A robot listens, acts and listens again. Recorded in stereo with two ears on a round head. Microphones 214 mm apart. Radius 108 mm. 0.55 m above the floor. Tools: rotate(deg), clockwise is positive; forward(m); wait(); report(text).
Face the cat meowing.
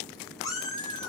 rotate(-20)
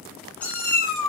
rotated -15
rotate(-30)
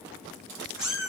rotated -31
report("Found it: a cat meowing, straight ahead.")